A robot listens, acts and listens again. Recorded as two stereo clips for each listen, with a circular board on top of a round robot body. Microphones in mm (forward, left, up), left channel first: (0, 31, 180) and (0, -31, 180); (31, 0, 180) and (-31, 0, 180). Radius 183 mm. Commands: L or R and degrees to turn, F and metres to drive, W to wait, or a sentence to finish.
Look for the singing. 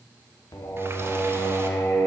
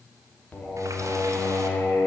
L50
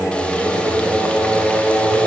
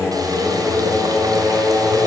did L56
R30
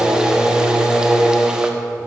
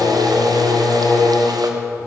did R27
R15
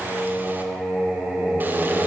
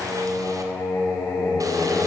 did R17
Facing the singing.